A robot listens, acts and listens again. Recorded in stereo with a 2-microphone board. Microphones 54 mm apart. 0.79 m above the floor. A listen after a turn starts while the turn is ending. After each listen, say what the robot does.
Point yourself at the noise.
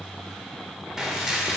Turn 30° right.
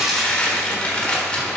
Turn 20° left.
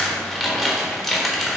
Facing the dishes clattering.